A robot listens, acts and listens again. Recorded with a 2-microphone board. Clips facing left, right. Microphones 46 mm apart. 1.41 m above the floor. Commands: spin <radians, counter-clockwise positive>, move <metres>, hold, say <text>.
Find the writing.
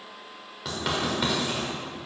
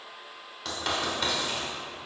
spin 0.52
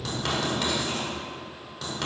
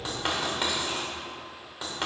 spin -0.35
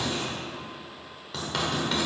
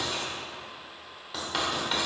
say Facing the writing.